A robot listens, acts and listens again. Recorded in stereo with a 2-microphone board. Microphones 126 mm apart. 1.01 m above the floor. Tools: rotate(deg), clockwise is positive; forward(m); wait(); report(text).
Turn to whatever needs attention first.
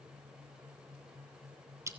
wait()
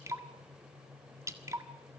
wait()
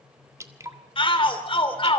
rotate(-45)
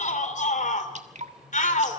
rotate(-90)
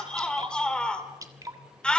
rotate(-10)
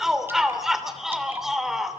report("Facing the shout, 2 to 4 m away.")